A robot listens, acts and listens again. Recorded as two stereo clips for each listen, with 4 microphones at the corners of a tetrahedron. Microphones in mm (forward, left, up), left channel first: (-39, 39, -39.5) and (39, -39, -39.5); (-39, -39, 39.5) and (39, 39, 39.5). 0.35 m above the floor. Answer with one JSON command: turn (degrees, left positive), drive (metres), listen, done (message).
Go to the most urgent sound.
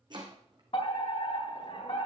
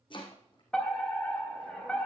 {"turn": 145}
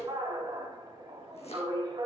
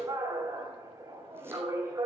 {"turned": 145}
{"turn": -10}
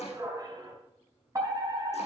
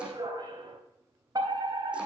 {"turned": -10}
{"drive": 1.0}
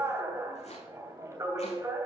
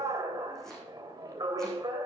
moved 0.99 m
{"drive": 1.0}
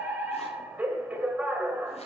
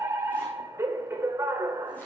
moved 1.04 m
{"turn": 10}
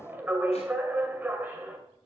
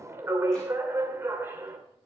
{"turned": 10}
{"drive": 1.0}
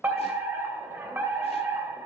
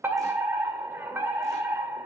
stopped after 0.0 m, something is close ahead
{"done": "I am next to the fire alarm."}